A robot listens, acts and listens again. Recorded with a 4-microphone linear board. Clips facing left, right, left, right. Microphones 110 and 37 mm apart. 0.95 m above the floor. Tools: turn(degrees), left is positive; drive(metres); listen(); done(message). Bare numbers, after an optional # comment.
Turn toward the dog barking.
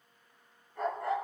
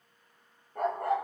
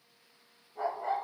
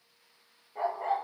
# The dog barking: about 50° right or 130° right.
turn(-50)
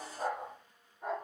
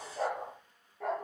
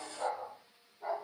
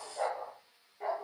# So it is at 80° right.
turn(-80)
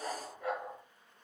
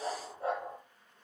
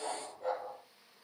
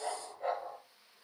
# The dog barking is now 35° right.
turn(-35)
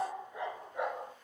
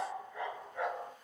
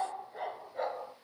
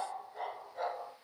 # The dog barking is now 15° left.
turn(15)
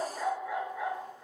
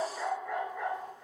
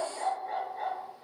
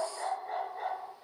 done("Facing the dog barking, over 4 m away.")